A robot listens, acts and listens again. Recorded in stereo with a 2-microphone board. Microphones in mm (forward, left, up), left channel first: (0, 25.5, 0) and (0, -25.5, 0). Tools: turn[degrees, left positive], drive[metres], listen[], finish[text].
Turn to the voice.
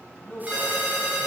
Thought: The man speaking: about 25° left or 155° left.
Action: turn[25]
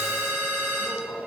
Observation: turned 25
Action: finish[Facing the man speaking, 2 to 4 m away.]